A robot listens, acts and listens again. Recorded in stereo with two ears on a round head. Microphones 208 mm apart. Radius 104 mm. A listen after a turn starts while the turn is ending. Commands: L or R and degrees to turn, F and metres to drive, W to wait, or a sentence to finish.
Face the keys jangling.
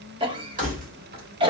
R35
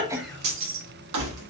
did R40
R100
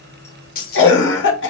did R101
L40
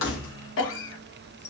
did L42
W
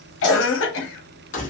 L35
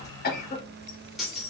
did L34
Facing the keys jangling.